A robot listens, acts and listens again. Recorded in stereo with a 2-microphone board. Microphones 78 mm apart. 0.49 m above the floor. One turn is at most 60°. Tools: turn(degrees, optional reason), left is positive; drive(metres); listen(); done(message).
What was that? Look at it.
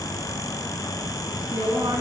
turn(degrees=-60, reason="The woman speaking: about 60° right or 120° right.")
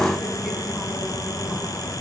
listen()
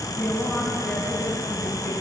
turn(degrees=15, reason="So it is at 15° left.")
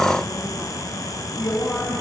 turn(degrees=15, reason="The woman speaking is now 15° left.")
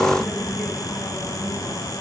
listen()
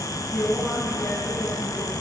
done("Facing the woman speaking.")